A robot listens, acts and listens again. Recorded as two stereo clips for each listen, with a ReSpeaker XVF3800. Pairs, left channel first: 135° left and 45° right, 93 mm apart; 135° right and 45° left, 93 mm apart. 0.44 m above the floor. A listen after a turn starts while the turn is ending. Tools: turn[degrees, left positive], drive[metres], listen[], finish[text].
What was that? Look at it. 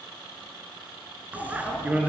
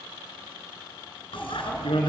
Thought: The bicycle bell: 120° right.
Action: turn[-120]
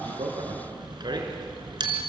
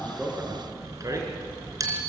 Action: finish[Facing the bicycle bell.]